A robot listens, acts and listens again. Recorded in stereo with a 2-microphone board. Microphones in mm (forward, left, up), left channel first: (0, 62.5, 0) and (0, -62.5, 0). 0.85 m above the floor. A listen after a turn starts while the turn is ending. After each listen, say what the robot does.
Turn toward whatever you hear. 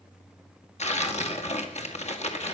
Turn 60° left.
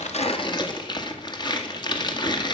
Turn 40° left.
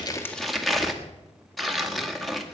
Facing the tearing paper.